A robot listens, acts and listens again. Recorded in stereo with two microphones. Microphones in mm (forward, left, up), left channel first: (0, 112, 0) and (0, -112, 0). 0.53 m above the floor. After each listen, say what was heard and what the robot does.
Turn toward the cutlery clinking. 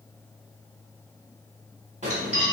The cutlery clinking: about 30° left or 150° left. Turn 30° left.
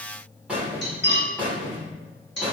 So it is at 115° left. Turn 115° left.
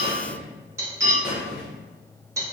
The cutlery clinking is now 15° right. Turn 15° right.
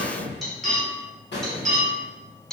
Found it: cutlery clinking, straight ahead, under 1 m away.